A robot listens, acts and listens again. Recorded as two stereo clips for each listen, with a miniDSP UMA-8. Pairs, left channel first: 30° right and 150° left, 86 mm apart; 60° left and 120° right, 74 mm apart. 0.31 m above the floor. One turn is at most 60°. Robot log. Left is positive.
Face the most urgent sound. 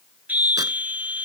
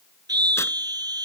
note: The scream: 140° right.
cmd yaw -60
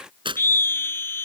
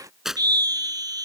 note: The scream is now 90° right.
cmd yaw -60
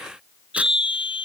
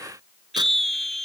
note: The scream is now 25° right.
cmd yaw -25
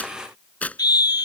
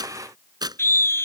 note: The scream is now 10° left.
cmd yaw +10
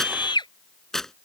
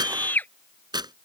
end: Found it: a scream, straight ahead.